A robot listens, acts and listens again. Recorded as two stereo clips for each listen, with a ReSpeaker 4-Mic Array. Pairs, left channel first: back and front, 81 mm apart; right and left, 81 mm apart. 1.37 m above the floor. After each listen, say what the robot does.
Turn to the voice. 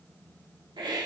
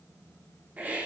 Keep listening.
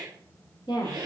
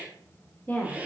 Turn 160° right.
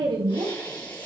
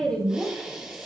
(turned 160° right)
Turn 10° right.
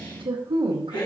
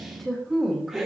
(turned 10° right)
Facing the woman speaking.